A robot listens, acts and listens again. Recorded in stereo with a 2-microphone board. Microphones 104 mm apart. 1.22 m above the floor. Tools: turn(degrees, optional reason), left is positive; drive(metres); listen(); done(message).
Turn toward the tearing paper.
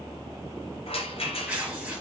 turn(degrees=-30)
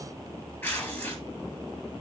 turn(degrees=20, reason="So it is at 20° left.")
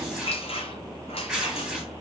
done("Found it: tearing paper, straight ahead, 2 to 4 m away.")